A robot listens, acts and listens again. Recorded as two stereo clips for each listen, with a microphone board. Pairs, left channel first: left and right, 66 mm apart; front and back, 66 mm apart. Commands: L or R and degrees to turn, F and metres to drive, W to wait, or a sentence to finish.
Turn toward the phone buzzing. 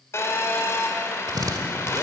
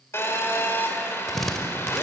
L50
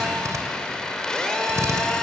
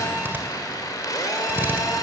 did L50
L10
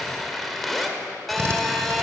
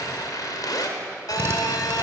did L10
Facing the phone buzzing, 2 to 4 m away.